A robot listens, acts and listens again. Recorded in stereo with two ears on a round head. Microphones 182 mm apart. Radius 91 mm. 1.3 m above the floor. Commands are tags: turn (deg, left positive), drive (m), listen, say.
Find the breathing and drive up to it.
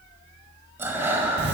<turn deg="-30"/>
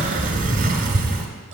<listen/>
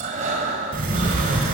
<turn deg="-135"/>
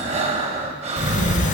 <turn deg="-40"/>
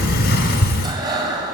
<turn deg="-25"/>
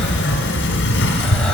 <listen/>
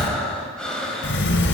<drive m="1.0"/>
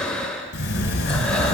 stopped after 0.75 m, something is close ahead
<say>Arrived at the breathing, straight ahead.</say>